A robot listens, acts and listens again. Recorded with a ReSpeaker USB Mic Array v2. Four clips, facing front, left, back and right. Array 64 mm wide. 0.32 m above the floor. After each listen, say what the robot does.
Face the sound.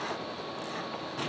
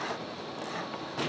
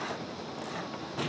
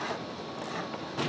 Keep listening.
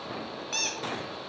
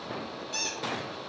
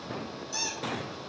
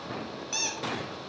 Turn 20° right.
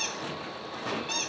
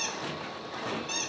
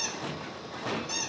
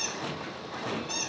Facing the squeak.